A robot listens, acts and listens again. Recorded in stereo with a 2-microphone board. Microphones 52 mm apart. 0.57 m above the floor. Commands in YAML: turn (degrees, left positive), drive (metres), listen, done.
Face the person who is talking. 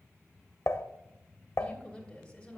turn: 15
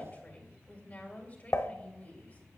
turn: 150
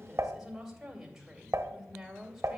done: "Facing the woman speaking, 2 to 4 m away."